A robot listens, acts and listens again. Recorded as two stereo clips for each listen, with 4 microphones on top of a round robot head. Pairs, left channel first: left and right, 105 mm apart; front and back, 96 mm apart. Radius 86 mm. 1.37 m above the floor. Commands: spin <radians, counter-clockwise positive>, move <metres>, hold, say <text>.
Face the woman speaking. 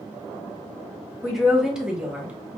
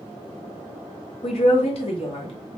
spin -0.17
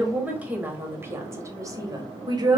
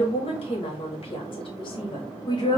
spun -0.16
spin -0.79
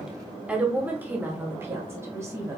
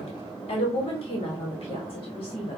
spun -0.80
spin -0.44
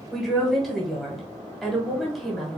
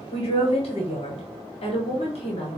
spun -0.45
say Facing the woman speaking, 1 to 2 m away.